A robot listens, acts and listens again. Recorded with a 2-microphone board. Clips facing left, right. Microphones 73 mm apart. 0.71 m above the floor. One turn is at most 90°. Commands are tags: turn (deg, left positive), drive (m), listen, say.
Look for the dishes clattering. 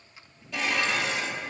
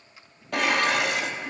<turn deg="-60"/>
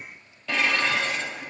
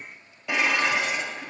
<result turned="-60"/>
<turn deg="-15"/>
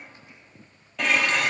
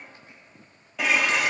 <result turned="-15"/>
<say>Facing the dishes clattering.</say>